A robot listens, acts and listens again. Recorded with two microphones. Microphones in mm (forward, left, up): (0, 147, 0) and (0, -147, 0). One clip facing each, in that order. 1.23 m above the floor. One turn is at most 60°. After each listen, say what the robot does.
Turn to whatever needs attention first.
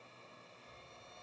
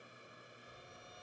Keep listening.
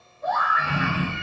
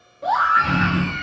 Turn 60° right.
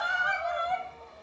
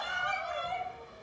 Turn 35° right.
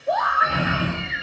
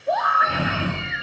Facing the scream.